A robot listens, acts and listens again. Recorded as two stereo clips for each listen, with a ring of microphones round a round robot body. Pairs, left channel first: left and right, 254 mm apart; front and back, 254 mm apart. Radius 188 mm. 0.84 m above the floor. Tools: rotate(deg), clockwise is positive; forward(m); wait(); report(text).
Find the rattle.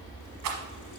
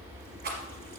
rotate(120)
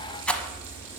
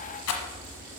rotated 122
report("Facing the rattle.")